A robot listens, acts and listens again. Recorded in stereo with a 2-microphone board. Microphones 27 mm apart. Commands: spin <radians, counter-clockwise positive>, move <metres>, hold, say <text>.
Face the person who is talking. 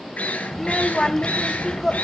spin 0.35
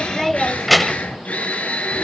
say Found it: a child speaking, straight ahead.